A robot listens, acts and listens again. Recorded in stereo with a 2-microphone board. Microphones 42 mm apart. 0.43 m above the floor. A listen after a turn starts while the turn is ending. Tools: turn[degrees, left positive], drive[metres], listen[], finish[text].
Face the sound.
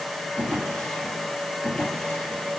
Thought: The drawer: about 20° left or 160° left.
Action: turn[20]
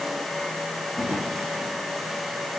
Action: finish[Found it: a drawer, straight ahead.]